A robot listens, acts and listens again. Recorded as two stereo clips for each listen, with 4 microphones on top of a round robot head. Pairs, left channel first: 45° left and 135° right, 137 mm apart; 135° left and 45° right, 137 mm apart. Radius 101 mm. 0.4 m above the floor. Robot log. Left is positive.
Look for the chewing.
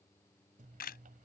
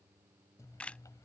note: The chewing: 155° right.
cmd yaw -155
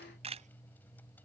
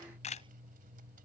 note: The chewing is now 35° right.
cmd yaw -35
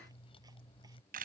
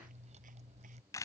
end: Found it: chewing, straight ahead.